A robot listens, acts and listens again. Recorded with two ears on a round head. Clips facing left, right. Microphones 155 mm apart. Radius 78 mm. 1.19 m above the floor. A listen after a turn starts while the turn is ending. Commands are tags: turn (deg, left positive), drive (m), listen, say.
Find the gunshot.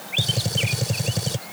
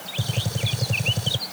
<turn deg="20"/>
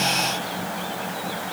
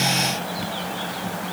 <listen/>
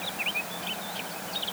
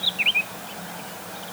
<say>I heard a gunshot, but can't make it out now. It was about straight ahead or 140° left.</say>